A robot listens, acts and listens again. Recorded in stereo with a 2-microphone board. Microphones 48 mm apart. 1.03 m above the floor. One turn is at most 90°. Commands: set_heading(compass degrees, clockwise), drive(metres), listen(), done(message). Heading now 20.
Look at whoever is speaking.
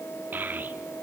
set_heading(60)
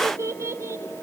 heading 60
set_heading(150)
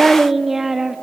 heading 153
done("Found it: a child speaking, straight ahead.")